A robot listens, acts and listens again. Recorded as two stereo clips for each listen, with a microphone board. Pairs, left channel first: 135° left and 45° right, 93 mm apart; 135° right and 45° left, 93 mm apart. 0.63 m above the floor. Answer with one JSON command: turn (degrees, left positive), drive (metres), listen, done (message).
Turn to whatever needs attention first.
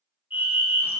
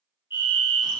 {"turn": -110}
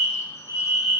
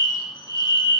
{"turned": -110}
{"done": "Facing the fire alarm."}